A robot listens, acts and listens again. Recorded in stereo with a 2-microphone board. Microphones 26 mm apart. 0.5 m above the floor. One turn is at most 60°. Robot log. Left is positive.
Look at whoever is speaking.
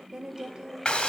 note: The woman speaking: about 30° right or 150° right.
cmd yaw -30
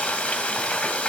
cmd idle
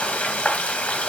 cmd idle
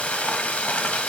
end: I heard a woman speaking, but can't make it out now. It was about straight ahead or 120° right.